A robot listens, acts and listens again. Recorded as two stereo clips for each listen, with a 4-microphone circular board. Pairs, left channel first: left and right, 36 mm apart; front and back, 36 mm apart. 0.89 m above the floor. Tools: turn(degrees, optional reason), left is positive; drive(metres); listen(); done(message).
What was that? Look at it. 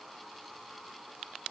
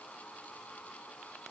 listen()
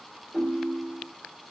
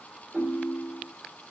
turn(degrees=-165, reason="The ringtone: 165° right.")
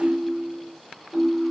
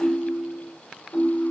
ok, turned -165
turn(degrees=-25, reason="The ringtone is now 25° right.")
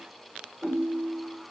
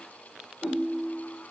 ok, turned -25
done("Facing the ringtone, 1 to 2 m away.")